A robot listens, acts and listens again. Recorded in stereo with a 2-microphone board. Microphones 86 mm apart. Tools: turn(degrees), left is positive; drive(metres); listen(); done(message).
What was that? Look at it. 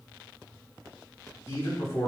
turn(degrees=35)
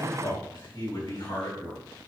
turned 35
turn(degrees=120)
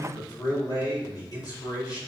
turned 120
turn(degrees=50)
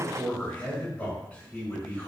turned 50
turn(degrees=15)
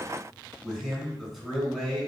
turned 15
done("Found it: a man speaking, straight ahead.")